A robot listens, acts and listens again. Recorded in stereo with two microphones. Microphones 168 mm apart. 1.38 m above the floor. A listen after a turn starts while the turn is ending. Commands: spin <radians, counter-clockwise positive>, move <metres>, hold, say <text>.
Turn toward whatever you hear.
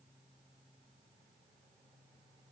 hold
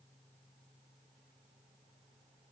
hold
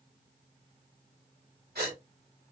spin -1.31
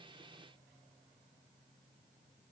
hold
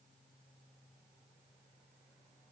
say I heard a gasp, but can't make it out now. It was about straight ahead or 30° right.